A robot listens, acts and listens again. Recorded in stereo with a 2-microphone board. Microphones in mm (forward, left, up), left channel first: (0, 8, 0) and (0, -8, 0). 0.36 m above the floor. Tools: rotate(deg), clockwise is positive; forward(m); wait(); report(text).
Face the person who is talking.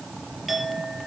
wait()
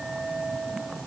wait()
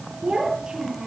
rotate(50)
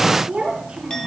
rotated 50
rotate(85)
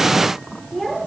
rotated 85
report("Found it: a child speaking, straight ahead.")